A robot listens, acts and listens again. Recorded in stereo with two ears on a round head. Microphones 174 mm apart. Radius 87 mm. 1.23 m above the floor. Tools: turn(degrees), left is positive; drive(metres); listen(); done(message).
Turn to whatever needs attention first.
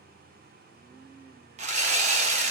listen()
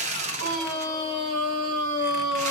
turn(degrees=-75)
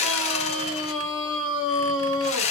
done("Found it: a scream, straight ahead.")